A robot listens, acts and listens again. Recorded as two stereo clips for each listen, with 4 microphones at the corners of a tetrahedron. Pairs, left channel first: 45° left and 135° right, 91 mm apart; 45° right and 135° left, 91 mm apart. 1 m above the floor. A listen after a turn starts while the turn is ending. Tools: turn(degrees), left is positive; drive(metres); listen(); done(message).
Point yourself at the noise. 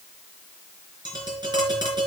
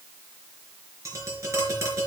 turn(degrees=-170)
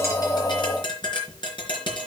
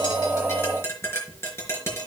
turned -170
turn(degrees=15)
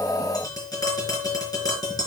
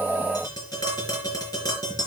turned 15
done("Facing the tapping, over 4 m away.")